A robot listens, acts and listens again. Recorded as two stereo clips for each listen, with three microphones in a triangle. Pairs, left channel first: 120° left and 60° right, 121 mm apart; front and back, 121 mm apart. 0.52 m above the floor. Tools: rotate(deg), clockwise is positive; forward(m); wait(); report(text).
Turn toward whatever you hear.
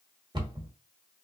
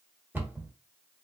rotate(110)
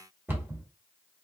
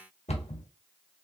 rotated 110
rotate(-10)
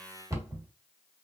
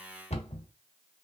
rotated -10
report("Found it: a cupboard door, straight ahead.")